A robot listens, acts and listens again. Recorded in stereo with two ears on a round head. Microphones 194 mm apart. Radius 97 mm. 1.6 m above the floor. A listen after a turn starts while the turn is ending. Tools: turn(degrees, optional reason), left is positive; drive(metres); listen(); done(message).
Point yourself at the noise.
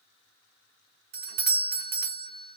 turn(degrees=-45, reason="The doorbell: about 45° right or 135° right.")
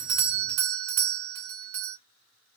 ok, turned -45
turn(degrees=-85, reason="So it is at 85° right.")
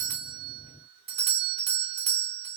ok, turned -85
turn(degrees=-30, reason="The doorbell is now 30° right.")
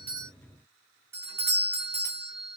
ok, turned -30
turn(degrees=-10, reason="The doorbell is now 10° right.")
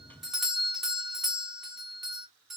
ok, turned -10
done("Facing the doorbell, under 1 m away.")